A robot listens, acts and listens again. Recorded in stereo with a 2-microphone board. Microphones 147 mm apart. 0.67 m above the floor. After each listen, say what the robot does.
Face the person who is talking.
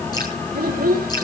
Turn 90° right.
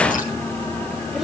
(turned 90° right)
Keep listening.
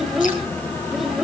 Found it: a child speaking, straight ahead.